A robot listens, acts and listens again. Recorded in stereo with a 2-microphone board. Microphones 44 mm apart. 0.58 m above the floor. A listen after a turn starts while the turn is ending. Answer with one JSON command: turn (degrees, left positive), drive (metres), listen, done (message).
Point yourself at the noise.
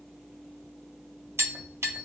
{"turn": -75}
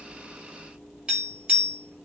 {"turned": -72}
{"turn": -25}
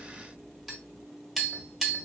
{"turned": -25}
{"done": "Facing the tapping, 1 to 2 m away."}